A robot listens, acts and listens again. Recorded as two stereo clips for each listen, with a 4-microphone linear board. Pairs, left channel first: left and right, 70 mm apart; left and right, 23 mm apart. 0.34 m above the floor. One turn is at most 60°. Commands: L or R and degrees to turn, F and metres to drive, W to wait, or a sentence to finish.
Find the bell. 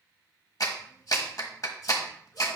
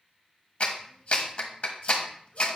W
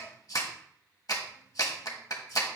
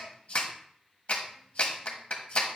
W
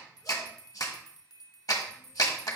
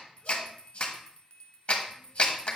L60
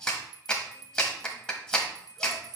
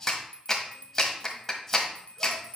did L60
L55
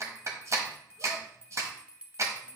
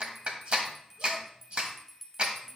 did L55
R15
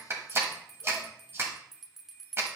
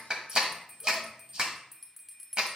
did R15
Found it: a bell, straight ahead, 1 to 2 m away.